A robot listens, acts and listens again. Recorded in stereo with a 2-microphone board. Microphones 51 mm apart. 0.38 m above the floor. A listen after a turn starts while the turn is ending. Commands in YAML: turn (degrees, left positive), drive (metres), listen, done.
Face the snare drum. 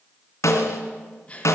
turn: 90
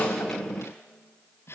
listen: true
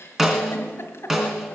turn: -10
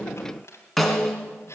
done: "Found it: a snare drum, straight ahead."